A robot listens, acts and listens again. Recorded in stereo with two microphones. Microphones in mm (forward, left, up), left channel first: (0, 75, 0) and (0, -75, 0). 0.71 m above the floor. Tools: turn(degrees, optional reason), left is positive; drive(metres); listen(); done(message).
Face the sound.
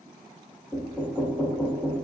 turn(degrees=-30)
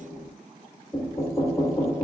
turn(degrees=20, reason="So it is at 20° left.")
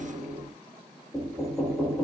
done("Facing the knocking, 1 to 2 m away.")